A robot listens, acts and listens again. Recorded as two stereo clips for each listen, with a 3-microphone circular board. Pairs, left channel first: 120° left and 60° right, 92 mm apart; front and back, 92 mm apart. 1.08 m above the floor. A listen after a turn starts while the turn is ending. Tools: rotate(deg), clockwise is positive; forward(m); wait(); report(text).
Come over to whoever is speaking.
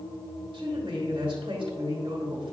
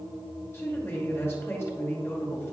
rotate(60)
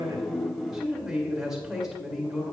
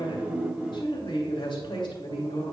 rotate(-25)
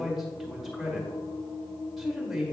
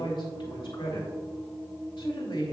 rotate(-25)
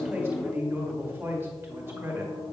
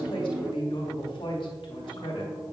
forward(1.0)
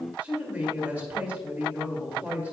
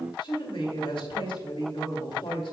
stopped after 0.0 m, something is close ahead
rotate(-15)
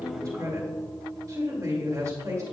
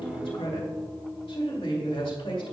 report("Blocked. The man speaking is further on, straight ahead.")